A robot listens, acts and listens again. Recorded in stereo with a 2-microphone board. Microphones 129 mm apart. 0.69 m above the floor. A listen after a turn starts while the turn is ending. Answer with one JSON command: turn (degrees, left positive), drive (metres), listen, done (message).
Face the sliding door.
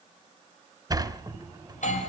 {"turn": -30}
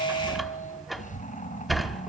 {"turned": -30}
{"done": "Facing the sliding door, 2 to 4 m away."}